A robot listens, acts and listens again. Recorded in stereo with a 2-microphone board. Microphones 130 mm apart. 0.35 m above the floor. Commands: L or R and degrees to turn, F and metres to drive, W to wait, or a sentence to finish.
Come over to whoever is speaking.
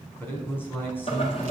L15
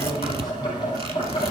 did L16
W
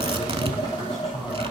W
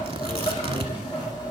I heard a man speaking, but can't make it out now. It was about straight ahead or 145° left. I did not reach it.